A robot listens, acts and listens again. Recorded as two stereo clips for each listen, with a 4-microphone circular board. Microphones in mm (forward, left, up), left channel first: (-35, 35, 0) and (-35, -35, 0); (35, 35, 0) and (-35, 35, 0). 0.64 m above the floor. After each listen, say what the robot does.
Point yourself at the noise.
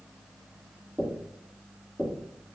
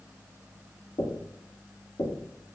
Facing the knocking, 1 to 2 m away.